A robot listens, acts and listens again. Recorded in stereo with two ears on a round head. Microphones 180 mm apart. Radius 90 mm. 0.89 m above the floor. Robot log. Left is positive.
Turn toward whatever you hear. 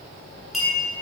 cmd yaw +30
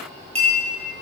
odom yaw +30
note: So it is at 30° right.
cmd yaw -30
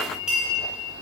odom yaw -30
end: Facing the clink, 2 to 4 m away.